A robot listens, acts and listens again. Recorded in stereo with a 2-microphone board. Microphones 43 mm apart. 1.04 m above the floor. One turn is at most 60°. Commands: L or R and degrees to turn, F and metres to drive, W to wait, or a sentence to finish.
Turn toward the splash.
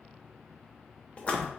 L30
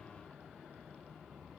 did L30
W
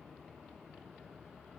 I heard a splash, but can't make it out now. It was about straight ahead or 120° left.